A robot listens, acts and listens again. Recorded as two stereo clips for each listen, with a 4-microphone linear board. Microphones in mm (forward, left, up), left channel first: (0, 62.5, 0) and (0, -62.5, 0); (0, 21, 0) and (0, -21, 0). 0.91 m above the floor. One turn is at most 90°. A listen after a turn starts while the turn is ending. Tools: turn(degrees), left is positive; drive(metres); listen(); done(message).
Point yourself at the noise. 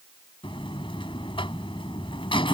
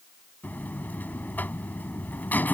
turn(degrees=45)
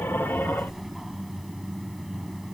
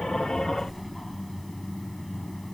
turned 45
done("Facing the buzzer.")